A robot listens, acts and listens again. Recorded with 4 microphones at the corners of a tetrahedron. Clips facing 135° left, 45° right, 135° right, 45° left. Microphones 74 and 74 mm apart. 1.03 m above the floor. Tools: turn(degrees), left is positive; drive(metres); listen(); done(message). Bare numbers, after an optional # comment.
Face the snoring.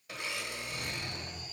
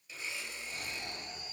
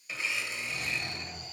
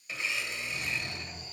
# The snoring: 110° right.
turn(-110)
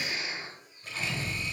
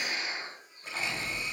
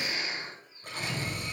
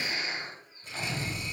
done("Facing the snoring.")